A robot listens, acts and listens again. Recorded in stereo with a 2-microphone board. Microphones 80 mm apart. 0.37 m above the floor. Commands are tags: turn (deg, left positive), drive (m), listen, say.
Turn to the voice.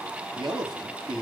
<turn deg="-90"/>
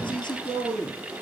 <say>Facing the man speaking.</say>